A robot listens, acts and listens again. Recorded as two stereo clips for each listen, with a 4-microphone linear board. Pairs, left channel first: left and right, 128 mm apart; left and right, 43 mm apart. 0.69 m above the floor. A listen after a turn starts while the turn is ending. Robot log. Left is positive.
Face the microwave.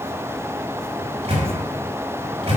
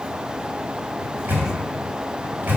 note: The microwave: about 55° right or 125° right.
cmd yaw -55
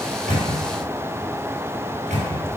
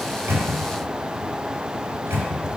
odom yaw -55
note: So it is at 70° right.
cmd yaw -70
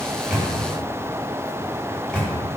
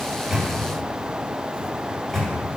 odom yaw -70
end: Found it: a microwave, straight ahead, 2 to 4 m away.